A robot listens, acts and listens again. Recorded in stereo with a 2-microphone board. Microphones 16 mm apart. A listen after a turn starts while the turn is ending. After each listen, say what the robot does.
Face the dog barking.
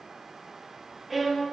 Keep listening.
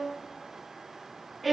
Keep listening.
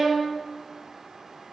I can't make out a dog barking, only a violin.